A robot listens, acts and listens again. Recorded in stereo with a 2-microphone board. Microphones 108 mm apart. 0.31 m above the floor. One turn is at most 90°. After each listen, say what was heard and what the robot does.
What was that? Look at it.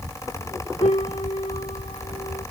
Turn 90° left.
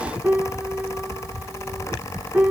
So it is at 15° right. Turn 15° right.
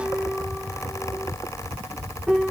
Facing the piano.